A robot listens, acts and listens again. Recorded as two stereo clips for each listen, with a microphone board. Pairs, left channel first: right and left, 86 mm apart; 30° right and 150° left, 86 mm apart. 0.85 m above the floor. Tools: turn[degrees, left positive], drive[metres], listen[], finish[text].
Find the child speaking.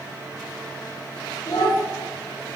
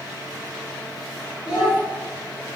Thought: The child speaking: 135° right.
Action: turn[-135]
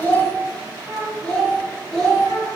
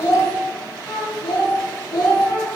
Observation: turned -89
Thought: The child speaking is now 10° right.
Action: turn[-10]
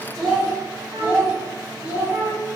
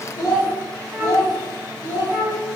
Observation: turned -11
Thought: The child speaking is now 20° left.
Action: turn[20]
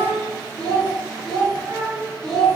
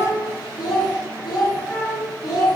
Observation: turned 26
Action: finish[Found it: a child speaking, straight ahead, 2 to 4 m away.]